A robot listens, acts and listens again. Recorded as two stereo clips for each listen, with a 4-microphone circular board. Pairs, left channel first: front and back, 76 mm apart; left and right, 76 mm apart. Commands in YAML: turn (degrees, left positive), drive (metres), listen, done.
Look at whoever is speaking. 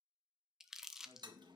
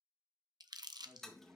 turn: -150
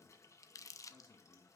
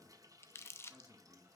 turn: -10
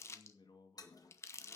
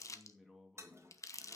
done: "Found it: a man speaking, straight ahead."